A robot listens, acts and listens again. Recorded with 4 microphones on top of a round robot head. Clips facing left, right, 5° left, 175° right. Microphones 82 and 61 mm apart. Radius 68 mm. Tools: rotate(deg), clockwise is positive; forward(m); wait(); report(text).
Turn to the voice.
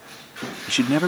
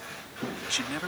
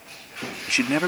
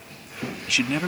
rotate(-60)
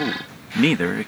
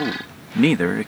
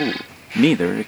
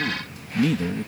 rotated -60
rotate(10)
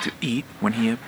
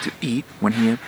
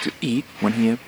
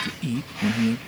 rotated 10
rotate(15)
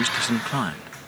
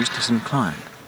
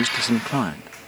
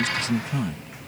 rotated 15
rotate(25)
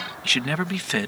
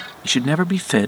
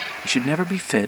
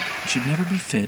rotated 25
rotate(40)
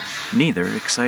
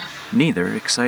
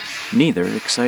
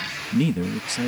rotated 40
report("Found it: a man speaking, straight ahead.")